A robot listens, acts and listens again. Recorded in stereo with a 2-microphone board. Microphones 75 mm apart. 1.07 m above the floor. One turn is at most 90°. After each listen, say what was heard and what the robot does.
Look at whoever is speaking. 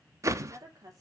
The woman speaking: about 50° right or 130° right. Turn 50° right.
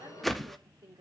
So it is at 80° right. Turn 80° right.
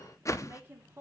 The woman speaking is now 30° right. Turn 30° right.
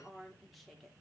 Found it: a woman speaking, straight ahead, 2 to 4 m away.